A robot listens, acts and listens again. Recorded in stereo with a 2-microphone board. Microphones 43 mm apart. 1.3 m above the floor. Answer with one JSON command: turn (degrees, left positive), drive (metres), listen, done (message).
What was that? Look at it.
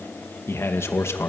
{"turn": 75}
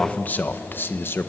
{"turn": 60}
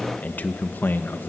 {"turn": 55}
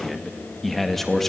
{"turn": 10}
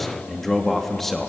{"done": "Facing the man speaking, 2 to 4 m away."}